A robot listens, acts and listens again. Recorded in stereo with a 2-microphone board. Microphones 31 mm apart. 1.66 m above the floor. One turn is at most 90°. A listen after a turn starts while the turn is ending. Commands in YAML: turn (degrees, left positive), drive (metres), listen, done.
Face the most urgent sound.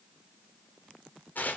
listen: true
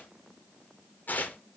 listen: true
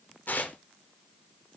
done: "I can't make out anything urgent, only tearing paper."